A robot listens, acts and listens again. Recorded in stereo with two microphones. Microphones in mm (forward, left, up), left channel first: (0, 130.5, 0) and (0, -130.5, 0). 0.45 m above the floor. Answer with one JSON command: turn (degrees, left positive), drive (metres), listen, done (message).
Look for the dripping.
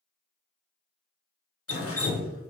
{"turn": 65}
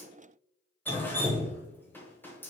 {"turn": 10}
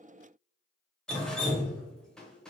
{"done": "Facing the dripping, under 1 m away."}